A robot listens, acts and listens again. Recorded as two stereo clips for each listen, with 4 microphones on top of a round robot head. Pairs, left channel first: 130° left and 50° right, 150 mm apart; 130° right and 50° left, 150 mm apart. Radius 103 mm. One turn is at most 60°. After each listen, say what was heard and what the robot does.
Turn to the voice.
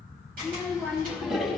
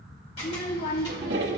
The child speaking: 110° right. Turn 60° right.
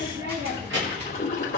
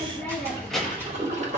The child speaking is now 40° right. Turn 40° right.
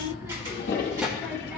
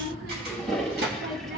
The child speaking is now 45° left. Turn 45° left.
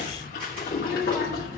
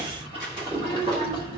The child speaking is now 25° left. Turn 25° left.
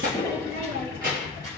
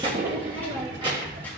The child speaking is now 15° right. Turn 15° right.
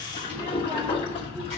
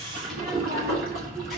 Found it: a child speaking, straight ahead, 1 to 2 m away.